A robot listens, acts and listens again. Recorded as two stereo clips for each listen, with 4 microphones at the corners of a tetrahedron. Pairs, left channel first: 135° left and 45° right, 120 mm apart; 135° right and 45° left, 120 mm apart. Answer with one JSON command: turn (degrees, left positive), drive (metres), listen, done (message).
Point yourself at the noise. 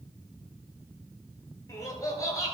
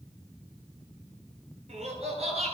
{"turn": 75}
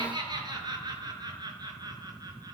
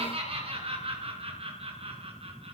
{"turn": 10}
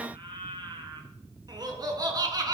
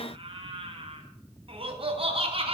{"turn": 10}
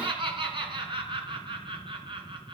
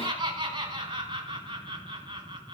{"done": "Facing the laughter."}